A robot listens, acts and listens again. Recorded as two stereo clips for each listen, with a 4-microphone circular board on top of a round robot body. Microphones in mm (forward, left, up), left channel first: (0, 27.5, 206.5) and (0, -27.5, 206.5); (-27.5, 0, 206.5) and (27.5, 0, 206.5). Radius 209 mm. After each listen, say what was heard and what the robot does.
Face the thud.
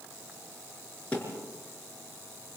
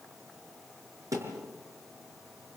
The thud: 25° left. Turn 25° left.
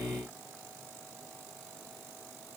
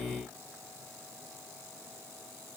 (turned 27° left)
Facing where the thud came from. I can't hear it now.